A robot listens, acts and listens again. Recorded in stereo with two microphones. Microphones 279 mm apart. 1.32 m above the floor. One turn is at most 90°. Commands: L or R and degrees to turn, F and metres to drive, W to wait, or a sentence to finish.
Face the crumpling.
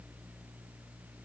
W
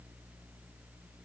W
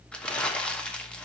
L30
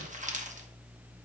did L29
R25
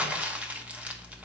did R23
Found it: crumpling, straight ahead, 1 to 2 m away.